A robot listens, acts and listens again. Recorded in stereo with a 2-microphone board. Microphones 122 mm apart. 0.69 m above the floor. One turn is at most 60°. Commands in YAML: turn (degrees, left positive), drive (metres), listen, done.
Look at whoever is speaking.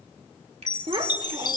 turn: -45
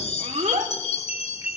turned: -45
turn: -60
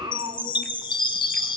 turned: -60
turn: -45
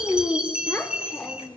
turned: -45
turn: 15
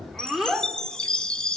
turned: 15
done: "Found it: a child speaking, straight ahead, 1 to 2 m away."